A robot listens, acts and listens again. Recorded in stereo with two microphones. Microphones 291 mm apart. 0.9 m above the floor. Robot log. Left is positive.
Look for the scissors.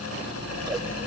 cmd yaw -30
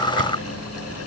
note: So it is at 140° right.
cmd yaw -140
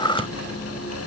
note: The scissors is now 20° left.
cmd yaw +20
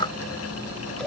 end: Found it: scissors, straight ahead.